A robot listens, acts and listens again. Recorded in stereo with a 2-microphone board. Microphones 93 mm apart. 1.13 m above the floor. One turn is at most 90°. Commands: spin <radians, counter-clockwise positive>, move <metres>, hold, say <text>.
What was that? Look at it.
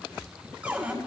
spin -0.52
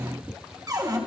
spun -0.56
spin -1.57
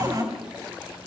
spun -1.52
spin -0.87
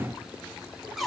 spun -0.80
say Found it: a cupboard door, straight ahead.